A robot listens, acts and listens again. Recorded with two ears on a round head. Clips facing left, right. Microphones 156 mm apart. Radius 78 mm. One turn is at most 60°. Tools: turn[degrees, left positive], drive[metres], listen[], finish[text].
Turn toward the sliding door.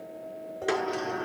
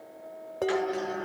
Thought: The sliding door: about 60° left or 120° left.
Action: turn[60]
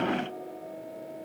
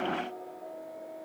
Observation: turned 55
Action: listen[]
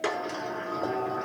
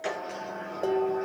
Thought: So it is at 65° left.
Action: turn[60]
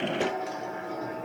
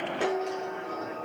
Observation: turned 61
Action: finish[Facing the sliding door.]